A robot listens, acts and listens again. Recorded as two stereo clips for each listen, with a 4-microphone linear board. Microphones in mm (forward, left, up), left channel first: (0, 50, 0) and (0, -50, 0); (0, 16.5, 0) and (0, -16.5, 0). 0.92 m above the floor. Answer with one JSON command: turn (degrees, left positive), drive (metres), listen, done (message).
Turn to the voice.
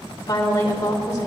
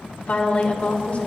{"turn": 35}
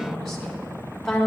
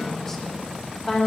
{"done": "Facing the woman speaking."}